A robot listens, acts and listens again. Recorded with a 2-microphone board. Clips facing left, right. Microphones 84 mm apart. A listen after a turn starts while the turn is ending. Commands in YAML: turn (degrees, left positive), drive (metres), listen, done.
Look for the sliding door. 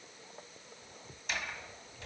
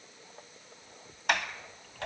turn: -70
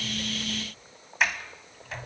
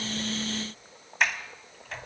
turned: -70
done: "Found it: a sliding door, straight ahead, 2 to 4 m away."